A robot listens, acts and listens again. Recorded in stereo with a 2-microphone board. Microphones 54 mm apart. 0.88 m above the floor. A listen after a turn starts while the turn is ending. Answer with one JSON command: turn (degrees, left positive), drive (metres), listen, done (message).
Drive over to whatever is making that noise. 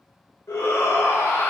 {"turn": 70}
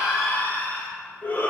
{"turn": 40}
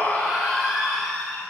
{"drive": 1.0}
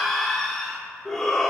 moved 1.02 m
{"turn": 10}
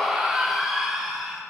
{"drive": 1.0}
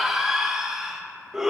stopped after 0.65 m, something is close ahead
{"turn": -10}
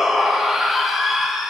{"done": "I am next to the shout."}